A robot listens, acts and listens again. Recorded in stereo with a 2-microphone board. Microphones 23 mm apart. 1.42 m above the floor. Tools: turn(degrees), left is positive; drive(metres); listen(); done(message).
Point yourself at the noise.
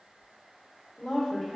turn(degrees=-30)
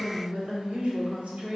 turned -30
turn(degrees=-100)
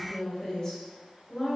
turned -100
turn(degrees=30)
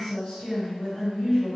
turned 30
turn(degrees=25)
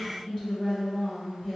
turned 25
done("Facing the woman speaking, 2 to 4 m away.")